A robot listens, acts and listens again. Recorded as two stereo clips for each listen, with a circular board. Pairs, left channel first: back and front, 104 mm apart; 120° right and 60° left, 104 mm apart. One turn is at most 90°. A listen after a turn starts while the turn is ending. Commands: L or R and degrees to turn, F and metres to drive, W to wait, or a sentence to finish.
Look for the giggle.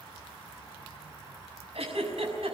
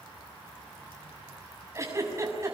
Found it: a giggle, straight ahead.